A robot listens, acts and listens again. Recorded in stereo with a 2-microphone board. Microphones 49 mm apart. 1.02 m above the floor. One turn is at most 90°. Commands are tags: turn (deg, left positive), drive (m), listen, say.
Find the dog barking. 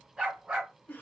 <turn deg="-20"/>
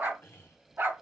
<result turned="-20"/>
<turn deg="-90"/>
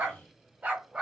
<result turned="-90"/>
<turn deg="-25"/>
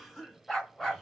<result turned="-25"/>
<turn deg="10"/>
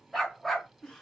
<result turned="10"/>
<say>Facing the dog barking.</say>